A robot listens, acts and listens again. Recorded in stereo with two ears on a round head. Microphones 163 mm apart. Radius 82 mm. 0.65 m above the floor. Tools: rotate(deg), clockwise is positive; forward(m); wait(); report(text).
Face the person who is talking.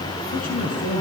rotate(-45)
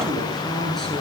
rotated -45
report("Found it: a man speaking, straight ahead, over 4 m away.")